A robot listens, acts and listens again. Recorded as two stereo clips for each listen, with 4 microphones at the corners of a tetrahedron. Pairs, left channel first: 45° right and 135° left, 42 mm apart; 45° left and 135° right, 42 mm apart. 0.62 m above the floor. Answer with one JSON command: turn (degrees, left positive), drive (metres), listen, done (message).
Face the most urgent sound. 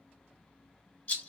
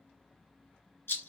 {"listen": true}
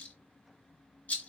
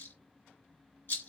{"listen": true}
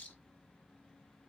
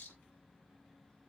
{"done": "I can't make out anything urgent, only a rattle."}